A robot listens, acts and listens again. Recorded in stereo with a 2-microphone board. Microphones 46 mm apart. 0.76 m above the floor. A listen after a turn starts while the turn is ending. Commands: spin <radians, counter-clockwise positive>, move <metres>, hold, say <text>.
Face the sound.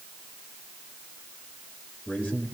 spin 0.79
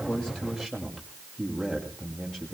say Facing the man speaking.